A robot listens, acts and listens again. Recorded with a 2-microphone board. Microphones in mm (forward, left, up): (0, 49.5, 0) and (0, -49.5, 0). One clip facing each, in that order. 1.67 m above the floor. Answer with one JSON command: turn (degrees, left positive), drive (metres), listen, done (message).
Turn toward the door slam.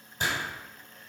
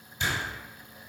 {"turn": 40}
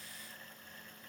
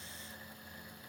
{"listen": true}
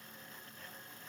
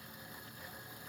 {"done": "I heard a door slam, but can't make it out now. It was about straight ahead or 100° left."}